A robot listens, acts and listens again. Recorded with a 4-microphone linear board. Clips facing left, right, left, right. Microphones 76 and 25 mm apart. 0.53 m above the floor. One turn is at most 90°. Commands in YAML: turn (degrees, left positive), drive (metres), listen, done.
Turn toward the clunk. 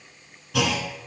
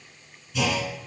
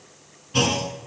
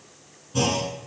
turn: 70
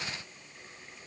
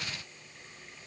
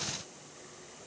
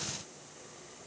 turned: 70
listen: true
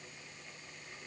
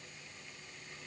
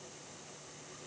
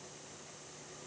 done: "I heard a clunk, but can't make it out now. It was about straight ahead or 40° left."